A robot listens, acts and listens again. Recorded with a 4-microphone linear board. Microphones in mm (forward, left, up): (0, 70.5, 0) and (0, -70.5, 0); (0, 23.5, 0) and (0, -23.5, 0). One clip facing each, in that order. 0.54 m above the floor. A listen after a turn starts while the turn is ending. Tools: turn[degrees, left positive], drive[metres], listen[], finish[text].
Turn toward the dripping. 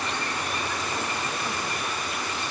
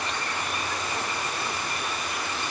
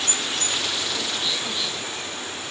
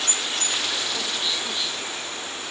Action: listen[]
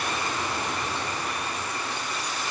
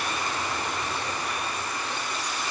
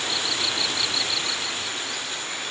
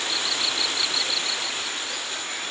Action: listen[]
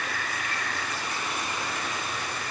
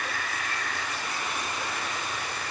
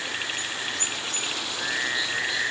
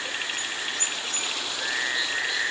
Action: finish[I can't make out dripping to turn to.]